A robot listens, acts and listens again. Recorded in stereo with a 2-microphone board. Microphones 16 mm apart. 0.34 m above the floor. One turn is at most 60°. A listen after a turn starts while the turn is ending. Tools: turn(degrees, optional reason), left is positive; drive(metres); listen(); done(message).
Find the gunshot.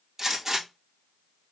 turn(degrees=-30, reason="The gunshot: about 30° right or 150° right.")
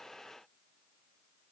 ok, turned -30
listen()
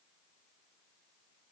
done("I heard a gunshot, but can't make it out now. It was about straight ahead or 120° right.")